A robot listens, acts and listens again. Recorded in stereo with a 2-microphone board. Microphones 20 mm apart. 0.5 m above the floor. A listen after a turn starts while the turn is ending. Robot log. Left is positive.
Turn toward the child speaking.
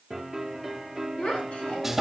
cmd yaw +90
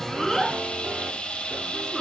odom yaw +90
cmd idle
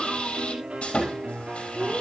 cmd idle
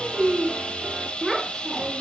end: Found it: a child speaking, straight ahead, over 4 m away.